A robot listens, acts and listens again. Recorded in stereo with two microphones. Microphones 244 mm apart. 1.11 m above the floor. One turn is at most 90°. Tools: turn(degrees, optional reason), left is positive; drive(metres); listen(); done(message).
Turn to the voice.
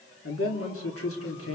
turn(degrees=65, reason="The man speaking: about 65° left or 115° left.")
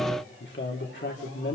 turn(degrees=50, reason="So it is at 50° left.")
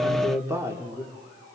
turn(degrees=-10, reason="The man speaking is now 10° right.")
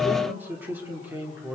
turn(degrees=-10, reason="The man speaking is now 10° right.")
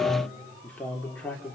done("Facing the man speaking, 2 to 4 m away.")